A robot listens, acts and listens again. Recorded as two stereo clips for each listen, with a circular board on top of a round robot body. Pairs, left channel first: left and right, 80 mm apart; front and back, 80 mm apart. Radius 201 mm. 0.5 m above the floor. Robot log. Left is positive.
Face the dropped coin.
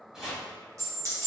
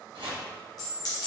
note: The dropped coin: 35° right.
cmd yaw -35
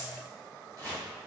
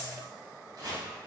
end: Facing where the dropped coin came from. I can't hear it now.